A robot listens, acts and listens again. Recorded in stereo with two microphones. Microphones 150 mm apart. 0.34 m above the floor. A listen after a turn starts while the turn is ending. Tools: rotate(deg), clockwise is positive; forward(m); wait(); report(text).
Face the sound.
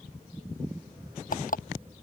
rotate(-70)
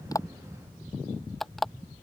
report("Facing the alarm clock.")